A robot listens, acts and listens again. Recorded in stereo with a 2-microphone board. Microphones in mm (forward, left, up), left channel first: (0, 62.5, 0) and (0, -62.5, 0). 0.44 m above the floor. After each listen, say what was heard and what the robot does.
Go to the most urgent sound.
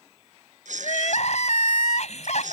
The crying: about 65° left or 115° left. Turn 65° left.
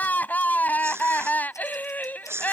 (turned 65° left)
So it is at 15° left. Turn 15° left.
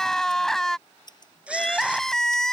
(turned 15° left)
Drive 1.0 m forward.
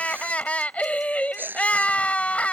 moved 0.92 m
The crying is now 10° left. Turn 10° left.
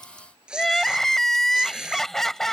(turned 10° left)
Drive 1.0 m forward.
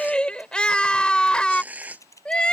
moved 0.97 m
The crying is now 10° left. Turn 10° left.
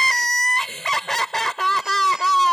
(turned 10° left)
Drive 1.0 m forward.
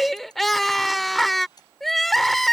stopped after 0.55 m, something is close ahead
I am next to the crying.